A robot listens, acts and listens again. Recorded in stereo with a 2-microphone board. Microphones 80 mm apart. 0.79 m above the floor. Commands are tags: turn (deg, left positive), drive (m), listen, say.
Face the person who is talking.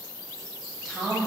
<turn deg="30"/>
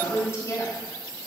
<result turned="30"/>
<turn deg="145"/>
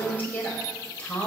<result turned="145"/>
<turn deg="15"/>
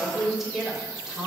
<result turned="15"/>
<say>Facing the woman speaking, 2 to 4 m away.</say>